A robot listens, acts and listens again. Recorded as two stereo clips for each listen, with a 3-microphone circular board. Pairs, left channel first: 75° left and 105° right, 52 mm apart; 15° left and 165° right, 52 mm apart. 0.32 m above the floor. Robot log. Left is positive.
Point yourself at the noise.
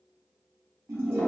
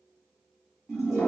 note: The toilet flushing: 80° right.
cmd yaw -80
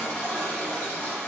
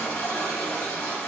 end: Facing the toilet flushing.